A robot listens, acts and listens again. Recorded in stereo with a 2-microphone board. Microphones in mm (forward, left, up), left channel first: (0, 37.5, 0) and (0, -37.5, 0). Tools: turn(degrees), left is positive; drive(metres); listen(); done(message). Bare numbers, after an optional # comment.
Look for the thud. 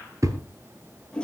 # The thud: about 45° right or 135° right.
turn(-45)
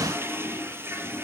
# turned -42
listen()
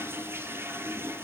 done("I heard a thud, but can't make it out now. It was about straight ahead or 95° right.")